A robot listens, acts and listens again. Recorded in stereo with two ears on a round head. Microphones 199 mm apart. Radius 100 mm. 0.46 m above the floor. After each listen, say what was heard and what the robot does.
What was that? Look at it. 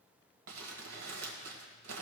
The crumpling: about 70° right or 110° right. Turn 70° right.
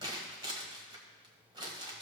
So it is at 20° right. Turn 20° right.
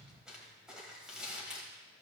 Found it: crumpling, straight ahead.